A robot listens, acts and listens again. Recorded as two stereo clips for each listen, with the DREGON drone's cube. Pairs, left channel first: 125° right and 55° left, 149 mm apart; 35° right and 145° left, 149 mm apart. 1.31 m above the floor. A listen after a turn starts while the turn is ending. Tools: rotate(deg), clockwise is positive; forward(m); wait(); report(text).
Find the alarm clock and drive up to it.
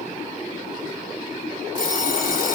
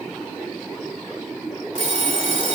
rotate(-110)
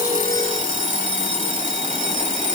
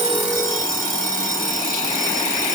rotate(-25)
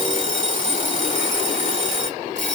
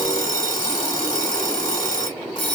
rotate(-20)
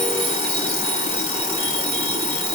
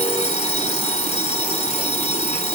forward(1.0)
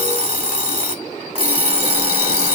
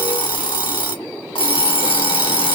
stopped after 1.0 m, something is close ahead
rotate(-15)
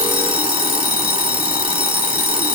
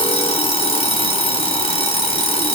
report("Arrived at the alarm clock, straight ahead.")